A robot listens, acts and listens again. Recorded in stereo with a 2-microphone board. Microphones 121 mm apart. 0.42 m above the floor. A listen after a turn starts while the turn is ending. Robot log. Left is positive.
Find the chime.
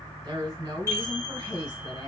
note: The chime: about 25° right or 155° right.
cmd yaw -25
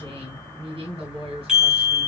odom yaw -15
end: Found it: a chime, straight ahead, 2 to 4 m away.